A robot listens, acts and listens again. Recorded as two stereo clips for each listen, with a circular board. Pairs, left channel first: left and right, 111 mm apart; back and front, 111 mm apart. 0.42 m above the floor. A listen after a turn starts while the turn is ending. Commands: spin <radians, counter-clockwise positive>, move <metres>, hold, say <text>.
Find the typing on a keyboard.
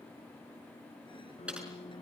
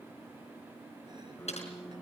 spin -2.97
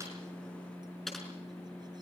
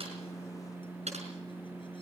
say Found it: typing on a keyboard, straight ahead.